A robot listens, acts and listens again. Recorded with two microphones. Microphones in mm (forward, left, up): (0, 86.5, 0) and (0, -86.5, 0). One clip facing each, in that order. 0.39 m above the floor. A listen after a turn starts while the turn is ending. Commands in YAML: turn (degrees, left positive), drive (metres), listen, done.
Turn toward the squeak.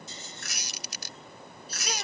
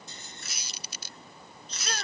turn: 70
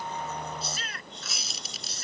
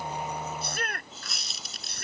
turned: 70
done: "Found it: a squeak, straight ahead."